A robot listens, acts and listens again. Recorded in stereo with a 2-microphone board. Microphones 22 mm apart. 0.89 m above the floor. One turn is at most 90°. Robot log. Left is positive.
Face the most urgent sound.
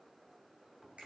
cmd idle
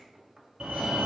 note: The fire alarm: about 55° right or 125° right.
cmd yaw -55
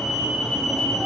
end: Facing the fire alarm.